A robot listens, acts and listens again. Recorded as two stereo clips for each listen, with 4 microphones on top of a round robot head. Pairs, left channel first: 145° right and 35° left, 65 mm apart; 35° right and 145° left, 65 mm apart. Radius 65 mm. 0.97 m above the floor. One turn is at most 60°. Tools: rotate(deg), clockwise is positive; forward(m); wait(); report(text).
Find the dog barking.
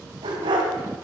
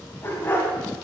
rotate(-30)
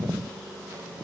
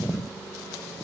wait()
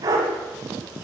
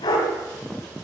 rotate(10)
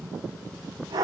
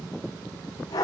report("Facing the dog barking.")